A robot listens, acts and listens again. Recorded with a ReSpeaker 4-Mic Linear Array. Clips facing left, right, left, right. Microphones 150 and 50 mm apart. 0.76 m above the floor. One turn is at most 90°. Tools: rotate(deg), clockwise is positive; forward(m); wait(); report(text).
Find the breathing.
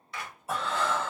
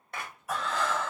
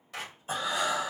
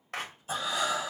rotate(-25)
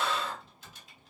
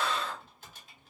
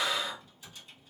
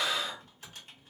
report("Found it: breathing, straight ahead.")